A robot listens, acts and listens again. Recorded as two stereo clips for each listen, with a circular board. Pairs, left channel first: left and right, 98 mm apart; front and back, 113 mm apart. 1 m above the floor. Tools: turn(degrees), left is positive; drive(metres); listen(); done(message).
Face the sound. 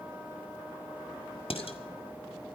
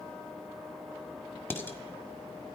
turn(degrees=70)
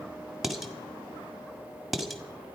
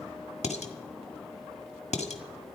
done("Found it: dishes clattering, straight ahead.")